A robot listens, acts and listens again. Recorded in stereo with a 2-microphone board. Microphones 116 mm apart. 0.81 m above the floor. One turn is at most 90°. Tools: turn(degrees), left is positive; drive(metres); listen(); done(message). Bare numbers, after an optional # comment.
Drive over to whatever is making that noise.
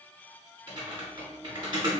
# The typing on a keyboard: about 40° right or 140° right.
turn(-40)
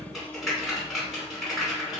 drive(1.0)
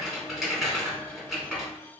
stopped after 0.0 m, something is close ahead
done("Something is in my way. I am facing the typing on a keyboard but have not reached it.")